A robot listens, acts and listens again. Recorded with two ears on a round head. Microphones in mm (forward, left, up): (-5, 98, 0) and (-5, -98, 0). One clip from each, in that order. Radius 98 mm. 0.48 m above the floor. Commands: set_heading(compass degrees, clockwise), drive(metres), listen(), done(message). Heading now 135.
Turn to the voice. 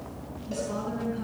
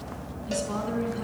set_heading(160)
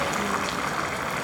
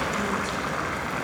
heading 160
listen()
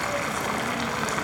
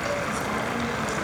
listen()
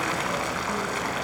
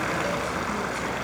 done("I heard a woman speaking, but can't make it out now. It was about straight ahead or 130° right.")